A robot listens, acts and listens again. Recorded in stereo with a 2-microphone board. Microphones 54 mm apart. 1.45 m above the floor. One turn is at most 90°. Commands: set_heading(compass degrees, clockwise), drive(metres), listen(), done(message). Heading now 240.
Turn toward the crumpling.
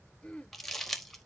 set_heading(210)
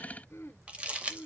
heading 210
set_heading(235)
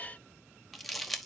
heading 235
done("Facing the crumpling, 1 to 2 m away.")